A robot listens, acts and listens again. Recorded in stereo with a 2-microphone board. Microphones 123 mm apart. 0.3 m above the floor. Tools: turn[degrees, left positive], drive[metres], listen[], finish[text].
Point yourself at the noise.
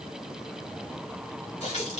Thought: The running tap: about 70° left or 110° left.
Action: turn[70]
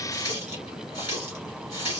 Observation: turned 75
Thought: So it is at 35° left.
Action: turn[35]
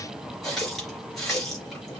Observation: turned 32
Action: finish[Found it: a running tap, straight ahead, 2 to 4 m away.]